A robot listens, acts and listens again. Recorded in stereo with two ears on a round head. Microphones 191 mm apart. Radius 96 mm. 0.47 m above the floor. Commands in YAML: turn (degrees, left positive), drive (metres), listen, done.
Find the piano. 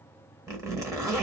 listen: true
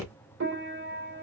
turn: -55
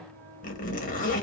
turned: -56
listen: true
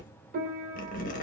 turn: -50
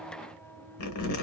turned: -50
done: "Facing the piano."